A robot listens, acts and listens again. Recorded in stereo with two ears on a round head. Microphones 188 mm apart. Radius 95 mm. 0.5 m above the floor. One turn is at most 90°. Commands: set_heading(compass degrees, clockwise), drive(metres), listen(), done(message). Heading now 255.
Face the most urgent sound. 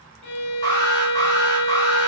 set_heading(235)
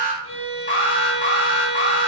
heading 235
set_heading(145)
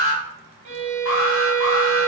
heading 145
set_heading(75)
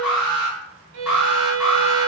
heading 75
done("Facing the alarm.")